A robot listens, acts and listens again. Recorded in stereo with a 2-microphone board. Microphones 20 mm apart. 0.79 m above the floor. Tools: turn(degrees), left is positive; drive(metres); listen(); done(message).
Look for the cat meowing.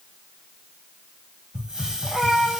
turn(degrees=-65)
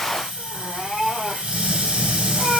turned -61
turn(degrees=-20)
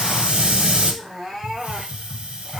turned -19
done("Facing the cat meowing.")